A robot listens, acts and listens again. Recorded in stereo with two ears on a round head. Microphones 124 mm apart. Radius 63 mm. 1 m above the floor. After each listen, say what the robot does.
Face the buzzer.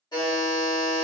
Turn 30° left.
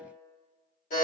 Turn 120° left.
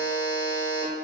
Found it: a buzzer, straight ahead, 1 to 2 m away.